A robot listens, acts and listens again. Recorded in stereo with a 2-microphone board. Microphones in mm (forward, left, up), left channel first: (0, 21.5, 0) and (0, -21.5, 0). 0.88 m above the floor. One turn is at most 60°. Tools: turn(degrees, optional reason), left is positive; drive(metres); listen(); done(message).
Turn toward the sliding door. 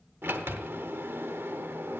turn(degrees=-60, reason="The sliding door: about 70° right or 110° right.")
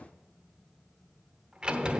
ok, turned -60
turn(degrees=-30, reason="So it is at 30° right.")
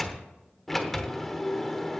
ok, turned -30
done("Found it: a sliding door, straight ahead.")